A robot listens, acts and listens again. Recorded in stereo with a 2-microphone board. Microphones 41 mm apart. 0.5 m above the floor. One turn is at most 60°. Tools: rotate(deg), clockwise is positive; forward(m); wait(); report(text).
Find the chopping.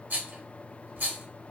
wait()
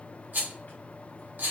wait()
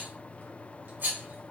report("I can't make out chopping to turn to.")